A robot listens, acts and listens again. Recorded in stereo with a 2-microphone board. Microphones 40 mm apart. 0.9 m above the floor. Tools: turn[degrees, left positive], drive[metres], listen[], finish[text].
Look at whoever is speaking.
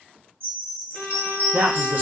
Thought: The man speaking: about 55° right or 125° right.
Action: turn[-55]
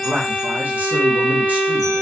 Thought: So it is at 50° right.
Action: turn[-50]
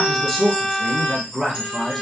Action: finish[Facing the man speaking.]